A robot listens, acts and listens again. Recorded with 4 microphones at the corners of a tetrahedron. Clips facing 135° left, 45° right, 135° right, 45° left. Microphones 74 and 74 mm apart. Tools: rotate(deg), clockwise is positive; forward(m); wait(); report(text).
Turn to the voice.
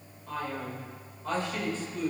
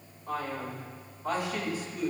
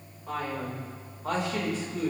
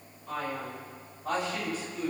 rotate(125)
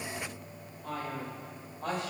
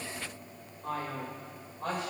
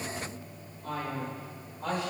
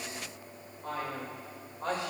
rotate(10)
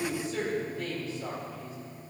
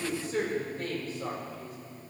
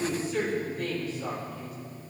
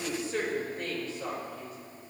report("Facing the man speaking, 2 to 4 m away.")